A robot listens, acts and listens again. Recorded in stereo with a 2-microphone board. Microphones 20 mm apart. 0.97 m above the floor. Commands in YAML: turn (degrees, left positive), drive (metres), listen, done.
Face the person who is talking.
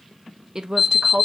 turn: -35
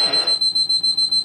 listen: true
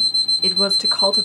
listen: true
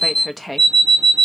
done: "Facing the woman speaking."